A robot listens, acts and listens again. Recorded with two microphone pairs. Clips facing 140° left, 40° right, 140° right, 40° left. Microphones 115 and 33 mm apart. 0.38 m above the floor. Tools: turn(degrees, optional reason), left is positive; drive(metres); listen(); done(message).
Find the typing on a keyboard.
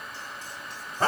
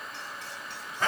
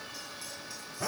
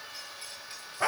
listen()
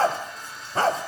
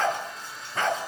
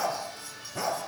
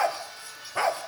listen()
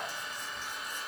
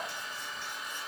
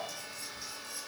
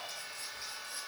done("I can't make out typing on a keyboard to turn to.")